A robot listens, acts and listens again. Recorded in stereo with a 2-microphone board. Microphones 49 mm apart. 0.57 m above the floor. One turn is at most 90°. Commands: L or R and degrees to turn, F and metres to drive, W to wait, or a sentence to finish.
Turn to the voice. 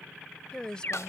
L20
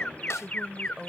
Found it: a woman speaking, straight ahead.